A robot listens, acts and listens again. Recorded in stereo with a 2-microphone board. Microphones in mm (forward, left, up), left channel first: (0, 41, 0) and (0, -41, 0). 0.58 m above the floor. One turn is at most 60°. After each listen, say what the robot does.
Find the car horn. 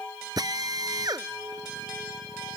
Keep listening.
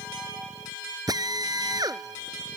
Keep listening.
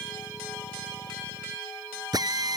I can't make out a car horn to turn to.